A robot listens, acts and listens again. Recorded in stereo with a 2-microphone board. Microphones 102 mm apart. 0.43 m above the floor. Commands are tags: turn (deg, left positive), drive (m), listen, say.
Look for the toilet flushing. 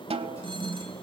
<turn deg="30"/>
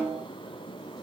<listen/>
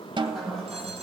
<say>Facing the toilet flushing.</say>